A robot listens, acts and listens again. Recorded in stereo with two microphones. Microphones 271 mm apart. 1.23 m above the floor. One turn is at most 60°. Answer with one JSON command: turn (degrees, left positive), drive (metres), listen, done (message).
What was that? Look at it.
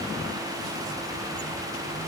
{"listen": true}
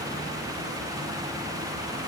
{"listen": true}
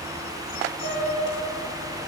{"turn": -45}
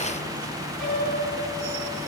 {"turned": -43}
{"done": "Found it: a piano, straight ahead, 2 to 4 m away."}